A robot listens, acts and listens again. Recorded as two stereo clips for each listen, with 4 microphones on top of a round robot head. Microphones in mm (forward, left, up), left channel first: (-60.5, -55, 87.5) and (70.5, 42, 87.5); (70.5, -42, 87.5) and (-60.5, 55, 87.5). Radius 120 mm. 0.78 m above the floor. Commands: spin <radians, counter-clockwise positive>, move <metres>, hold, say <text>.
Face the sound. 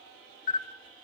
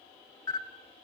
spin -1.83
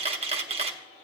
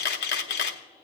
spin -0.35
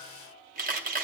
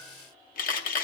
say Found it: a camera shutter, straight ahead.